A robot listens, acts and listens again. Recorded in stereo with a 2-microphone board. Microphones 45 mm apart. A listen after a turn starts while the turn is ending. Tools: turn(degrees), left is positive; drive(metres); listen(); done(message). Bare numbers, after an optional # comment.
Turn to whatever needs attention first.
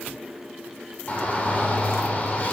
# The shout: about 35° left or 145° left.
turn(35)
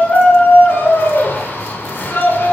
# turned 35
# So it is at 105° left.
turn(105)
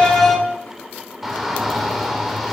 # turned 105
done("Found it: a shout, straight ahead.")